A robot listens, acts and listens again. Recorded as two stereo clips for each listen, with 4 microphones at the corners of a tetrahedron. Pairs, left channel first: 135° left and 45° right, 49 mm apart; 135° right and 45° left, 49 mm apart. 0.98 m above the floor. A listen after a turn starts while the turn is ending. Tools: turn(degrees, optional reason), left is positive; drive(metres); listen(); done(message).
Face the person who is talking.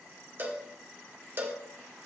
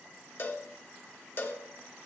listen()
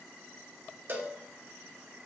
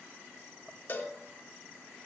listen()
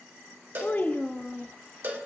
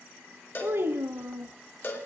turn(degrees=80, reason="The child speaking: 80° left.")
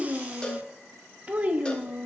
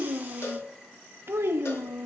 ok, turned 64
turn(degrees=15, reason="The child speaking is now 15° left.")
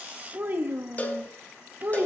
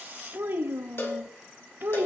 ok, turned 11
done("Found it: a child speaking, straight ahead.")